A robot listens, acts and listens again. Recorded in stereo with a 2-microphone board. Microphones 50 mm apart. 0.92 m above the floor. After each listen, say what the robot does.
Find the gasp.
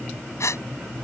Turn 75° left.
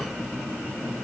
Keep listening.
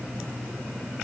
I heard a gasp, but can't make it out now. It was about straight ahead or 30° left.